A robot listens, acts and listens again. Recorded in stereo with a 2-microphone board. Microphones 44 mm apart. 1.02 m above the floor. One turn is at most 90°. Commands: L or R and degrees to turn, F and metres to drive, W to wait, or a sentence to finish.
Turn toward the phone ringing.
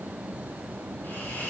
W
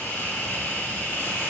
W
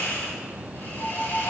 L65
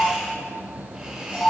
L50
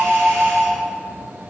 Facing the phone ringing, over 4 m away.